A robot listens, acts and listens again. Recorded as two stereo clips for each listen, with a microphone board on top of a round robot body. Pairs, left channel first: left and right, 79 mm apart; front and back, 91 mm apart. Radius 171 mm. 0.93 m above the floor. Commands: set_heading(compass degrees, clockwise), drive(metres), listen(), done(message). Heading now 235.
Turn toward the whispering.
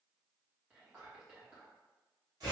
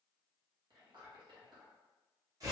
set_heading(40)
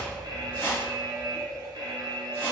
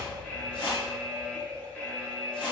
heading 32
listen()
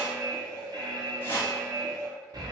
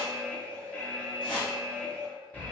listen()
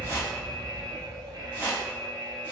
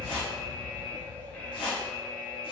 done("Facing where the whispering came from. I can't hear it now.")